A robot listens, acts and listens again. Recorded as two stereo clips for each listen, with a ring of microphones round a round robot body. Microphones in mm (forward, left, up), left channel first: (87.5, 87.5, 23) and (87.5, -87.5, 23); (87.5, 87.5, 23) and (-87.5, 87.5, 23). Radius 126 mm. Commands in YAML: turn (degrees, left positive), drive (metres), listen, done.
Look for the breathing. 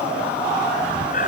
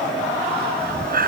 turn: 150
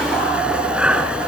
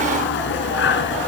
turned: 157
done: "Found it: breathing, straight ahead."